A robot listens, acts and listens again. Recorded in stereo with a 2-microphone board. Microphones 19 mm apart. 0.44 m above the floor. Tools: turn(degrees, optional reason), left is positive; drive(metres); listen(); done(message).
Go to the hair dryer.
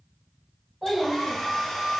turn(degrees=45, reason="The hair dryer: about 45° left or 135° left.")
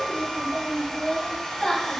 turn(degrees=85, reason="So it is at 85° left.")
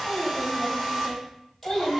drive(metres=1.0)
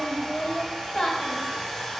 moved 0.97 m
turn(degrees=10, reason="The hair dryer is now 10° left.")
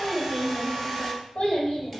drive(metres=1.0)
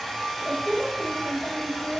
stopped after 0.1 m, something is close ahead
done("Arrived at the hair dryer, straight ahead.")